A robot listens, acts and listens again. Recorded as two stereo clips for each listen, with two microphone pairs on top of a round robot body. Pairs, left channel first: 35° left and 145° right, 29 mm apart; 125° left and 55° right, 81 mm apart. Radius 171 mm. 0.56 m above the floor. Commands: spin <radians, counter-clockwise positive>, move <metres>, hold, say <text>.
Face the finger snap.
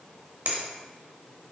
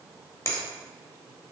spin 3.14
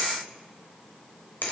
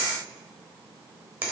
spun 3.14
spin 0.17
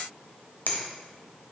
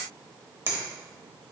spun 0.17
say Found it: a finger snap, straight ahead, 1 to 2 m away.